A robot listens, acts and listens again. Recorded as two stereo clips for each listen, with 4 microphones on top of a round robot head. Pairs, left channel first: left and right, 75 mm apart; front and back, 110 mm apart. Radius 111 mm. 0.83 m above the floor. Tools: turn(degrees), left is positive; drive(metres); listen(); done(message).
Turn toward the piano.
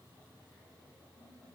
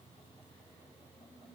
listen()
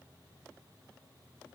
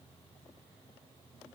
listen()
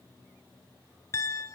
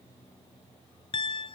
turn(degrees=40)
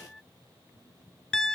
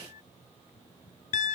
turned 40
done("Found it: a piano, straight ahead.")